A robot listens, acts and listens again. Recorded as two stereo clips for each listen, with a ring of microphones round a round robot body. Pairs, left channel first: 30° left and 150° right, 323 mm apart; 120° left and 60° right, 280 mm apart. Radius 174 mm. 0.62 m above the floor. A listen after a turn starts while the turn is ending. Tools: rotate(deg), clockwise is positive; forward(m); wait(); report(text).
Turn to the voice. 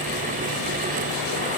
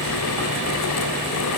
wait()
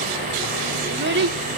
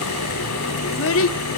rotate(-155)
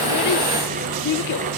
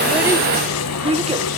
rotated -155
report("Facing the child speaking.")